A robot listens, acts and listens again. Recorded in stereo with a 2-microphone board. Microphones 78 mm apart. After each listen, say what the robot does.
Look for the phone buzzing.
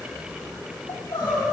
Keep listening.
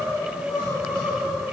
Keep listening.
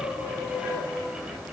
I can't make out a phone buzzing to turn to.